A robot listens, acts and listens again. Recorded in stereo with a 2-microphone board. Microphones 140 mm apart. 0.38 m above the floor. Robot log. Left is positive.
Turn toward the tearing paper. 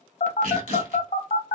note: The tearing paper: about 75° right or 105° right.
cmd yaw -75
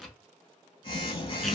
end: Found it: tearing paper, straight ahead.